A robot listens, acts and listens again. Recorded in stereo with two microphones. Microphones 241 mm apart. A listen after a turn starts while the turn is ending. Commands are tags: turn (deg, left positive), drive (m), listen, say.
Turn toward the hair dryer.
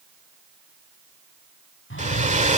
<turn deg="-30"/>
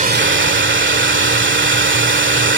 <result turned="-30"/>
<turn deg="-115"/>
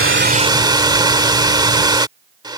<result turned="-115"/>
<turn deg="-20"/>
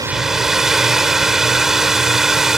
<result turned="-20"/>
<say>Found it: a hair dryer, straight ahead.</say>